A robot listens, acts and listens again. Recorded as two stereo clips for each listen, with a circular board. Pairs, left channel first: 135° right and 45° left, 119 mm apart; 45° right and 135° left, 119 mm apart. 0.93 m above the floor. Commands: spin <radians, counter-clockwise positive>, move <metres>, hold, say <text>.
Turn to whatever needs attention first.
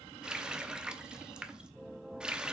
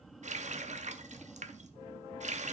hold
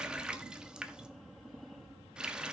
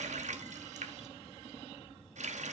hold
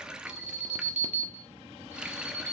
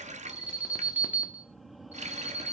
spin 1.05
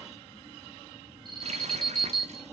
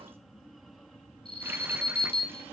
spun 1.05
say Facing the alarm.